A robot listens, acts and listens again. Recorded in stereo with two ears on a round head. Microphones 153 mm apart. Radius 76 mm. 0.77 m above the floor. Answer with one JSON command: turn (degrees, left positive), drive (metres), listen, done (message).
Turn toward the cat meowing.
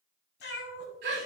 {"turn": 75}
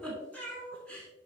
{"turn": 10}
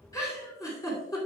{"listen": true}
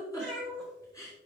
{"done": "Facing the cat meowing."}